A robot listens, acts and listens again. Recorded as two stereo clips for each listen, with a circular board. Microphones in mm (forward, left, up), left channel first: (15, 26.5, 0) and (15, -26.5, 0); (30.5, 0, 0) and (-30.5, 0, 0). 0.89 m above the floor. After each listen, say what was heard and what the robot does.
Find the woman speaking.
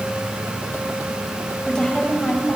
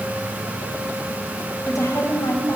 The woman speaking: 20° left. Turn 20° left.
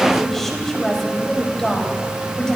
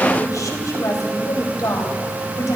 The woman speaking is now 15° left. Turn 15° left.
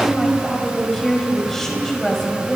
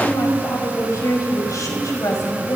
The woman speaking is now 10° left. Turn 10° left.
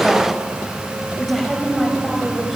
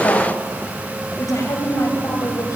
Facing the woman speaking, over 4 m away.